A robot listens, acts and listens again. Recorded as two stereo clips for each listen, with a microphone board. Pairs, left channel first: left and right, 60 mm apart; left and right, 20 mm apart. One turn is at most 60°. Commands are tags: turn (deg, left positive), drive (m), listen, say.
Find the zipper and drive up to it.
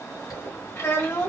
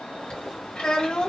<turn deg="60"/>
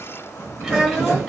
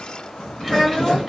<turn deg="40"/>
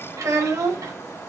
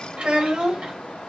<listen/>
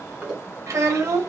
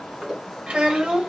<turn deg="-15"/>
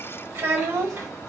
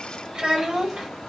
<listen/>
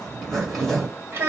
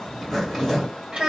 <drive m="1.0"/>
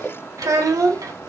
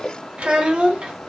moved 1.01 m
<drive m="1.0"/>
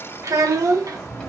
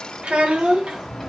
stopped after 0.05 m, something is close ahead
<turn deg="10"/>
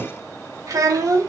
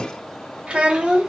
<say>Arrived at the zipper, straight ahead.</say>